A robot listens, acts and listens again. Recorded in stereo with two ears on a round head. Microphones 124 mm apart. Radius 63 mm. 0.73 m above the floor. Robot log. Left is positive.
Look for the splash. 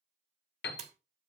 note: The splash: about 50° right or 130° right.
cmd yaw -50
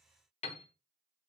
cmd idle
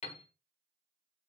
end: I heard a splash, but can't make it out now. It was about straight ahead or 80° right.